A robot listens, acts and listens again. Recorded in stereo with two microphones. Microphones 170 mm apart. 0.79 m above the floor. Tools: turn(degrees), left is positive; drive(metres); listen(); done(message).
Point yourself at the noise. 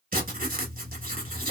turn(degrees=-55)
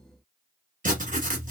turn(degrees=-60)
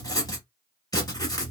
turn(degrees=20)
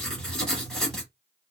done("Found it: writing, straight ahead.")